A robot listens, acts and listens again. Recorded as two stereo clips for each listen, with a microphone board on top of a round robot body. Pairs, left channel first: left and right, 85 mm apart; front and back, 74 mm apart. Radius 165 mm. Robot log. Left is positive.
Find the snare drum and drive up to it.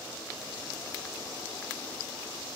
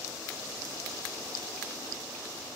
cmd idle
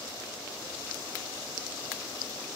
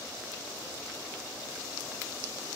cmd idle
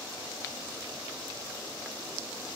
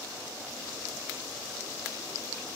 end: I can't make out a snare drum.